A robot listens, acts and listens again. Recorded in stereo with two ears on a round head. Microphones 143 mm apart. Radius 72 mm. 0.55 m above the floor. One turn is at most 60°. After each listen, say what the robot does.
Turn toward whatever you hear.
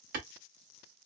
Turn 55° right.
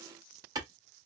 Turn 30° right.
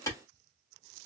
Turn 25° left.
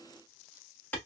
Turn 10° left.
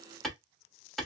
Facing the clap, 1 to 2 m away.